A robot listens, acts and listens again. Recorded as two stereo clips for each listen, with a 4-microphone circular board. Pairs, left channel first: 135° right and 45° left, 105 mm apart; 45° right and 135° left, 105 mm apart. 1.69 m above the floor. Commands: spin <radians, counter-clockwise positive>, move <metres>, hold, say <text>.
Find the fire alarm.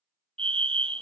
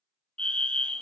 spin 0.61
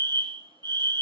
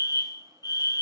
say Facing the fire alarm, 1 to 2 m away.